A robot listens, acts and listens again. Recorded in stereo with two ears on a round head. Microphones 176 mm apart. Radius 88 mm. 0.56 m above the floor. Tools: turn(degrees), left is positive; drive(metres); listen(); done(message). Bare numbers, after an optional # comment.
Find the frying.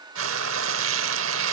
turn(-90)
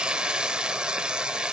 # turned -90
done("Found it: frying, straight ahead, 1 to 2 m away.")